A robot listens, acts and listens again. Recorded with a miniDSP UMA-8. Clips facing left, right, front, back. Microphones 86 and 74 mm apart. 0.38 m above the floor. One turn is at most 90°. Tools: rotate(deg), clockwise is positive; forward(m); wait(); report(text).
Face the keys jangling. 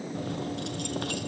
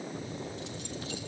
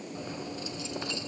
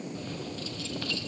rotate(-70)
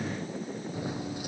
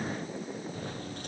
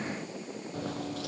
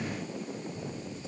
rotate(-10)
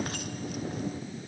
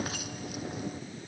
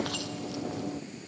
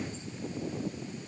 report("Found it: keys jangling, straight ahead.")